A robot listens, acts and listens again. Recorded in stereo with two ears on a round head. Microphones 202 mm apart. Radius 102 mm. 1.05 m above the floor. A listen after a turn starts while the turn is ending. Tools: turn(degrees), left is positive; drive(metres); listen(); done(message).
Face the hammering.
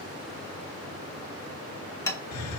turn(degrees=30)
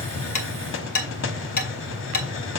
turn(degrees=140)
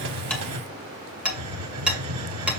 done("Facing the hammering.")